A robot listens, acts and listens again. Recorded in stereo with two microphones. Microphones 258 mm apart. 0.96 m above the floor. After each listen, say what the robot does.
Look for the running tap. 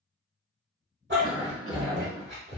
Keep listening.
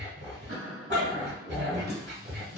Turn 55° left.
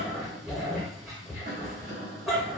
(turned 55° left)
Keep listening.
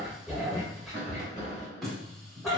Facing the running tap, 1 to 2 m away.